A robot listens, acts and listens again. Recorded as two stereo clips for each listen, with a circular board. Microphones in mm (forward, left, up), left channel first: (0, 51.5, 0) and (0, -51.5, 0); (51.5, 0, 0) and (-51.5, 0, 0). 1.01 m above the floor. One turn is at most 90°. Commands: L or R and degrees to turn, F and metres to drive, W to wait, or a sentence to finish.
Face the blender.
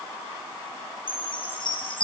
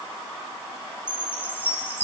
W
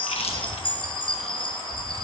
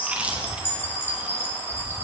W
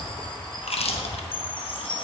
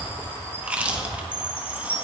I can't make out a blender, only a chime and chewing.